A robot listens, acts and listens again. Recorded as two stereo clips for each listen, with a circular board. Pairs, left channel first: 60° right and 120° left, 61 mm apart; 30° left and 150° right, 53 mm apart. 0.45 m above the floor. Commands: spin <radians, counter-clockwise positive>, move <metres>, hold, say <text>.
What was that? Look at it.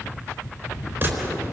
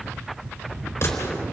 spin 1.13
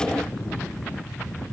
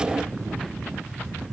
say Facing where the gunshot came from. I can't hear it now.